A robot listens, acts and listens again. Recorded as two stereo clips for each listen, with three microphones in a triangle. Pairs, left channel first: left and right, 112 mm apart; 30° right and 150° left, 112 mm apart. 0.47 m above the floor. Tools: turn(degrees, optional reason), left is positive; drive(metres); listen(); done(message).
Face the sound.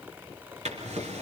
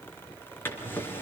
turn(degrees=-100, reason="The drawer: 100° right.")
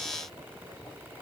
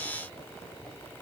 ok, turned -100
listen()
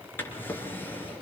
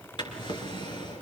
turn(degrees=20, reason="The drawer is now 20° left.")
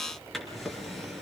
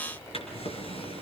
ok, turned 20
done("Found it: a drawer, straight ahead, over 4 m away.")